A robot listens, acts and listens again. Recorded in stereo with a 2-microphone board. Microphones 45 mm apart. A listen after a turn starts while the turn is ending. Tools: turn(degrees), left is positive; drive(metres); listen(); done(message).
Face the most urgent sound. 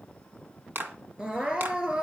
turn(degrees=-20)
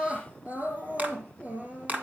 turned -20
turn(degrees=-140)
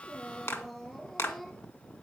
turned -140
turn(degrees=10)
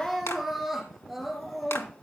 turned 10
done("Facing the crying.")